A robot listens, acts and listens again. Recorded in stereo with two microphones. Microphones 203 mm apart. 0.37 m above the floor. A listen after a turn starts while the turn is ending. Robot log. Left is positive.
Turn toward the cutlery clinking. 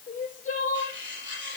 note: The cutlery clinking: about 65° right or 115° right.
cmd yaw -65
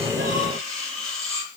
end: Facing the cutlery clinking.